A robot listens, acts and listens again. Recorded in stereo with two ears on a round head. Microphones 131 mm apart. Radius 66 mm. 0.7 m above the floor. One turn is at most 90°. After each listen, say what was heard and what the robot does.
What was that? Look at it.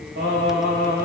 The singing: about 75° right or 105° right. Turn 75° right.
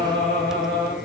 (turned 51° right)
So it is at 30° right. Turn 30° right.
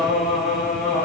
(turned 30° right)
The singing is now 10° left. Turn 10° left.
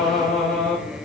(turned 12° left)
The singing is now 10° left. Turn 10° left.
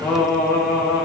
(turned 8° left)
The singing is now 25° left. Turn 25° left.
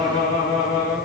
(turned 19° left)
The singing is now 15° left. Turn 15° left.
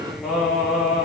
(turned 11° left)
Found it: singing, straight ahead.